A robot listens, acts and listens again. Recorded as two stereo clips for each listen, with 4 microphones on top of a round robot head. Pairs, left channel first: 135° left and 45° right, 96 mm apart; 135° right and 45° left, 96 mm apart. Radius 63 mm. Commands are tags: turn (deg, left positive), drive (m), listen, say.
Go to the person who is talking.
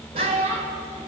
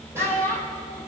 <turn deg="-70"/>
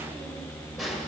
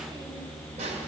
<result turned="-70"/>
<listen/>
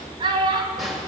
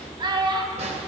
<drive m="1.0"/>
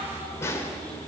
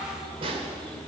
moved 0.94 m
<listen/>
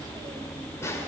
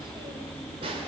<listen/>
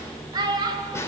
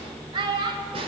<drive m="1.0"/>
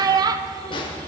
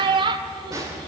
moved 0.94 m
<drive m="1.0"/>
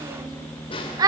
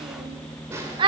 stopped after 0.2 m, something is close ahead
<say>Arrived at the child speaking, straight ahead.</say>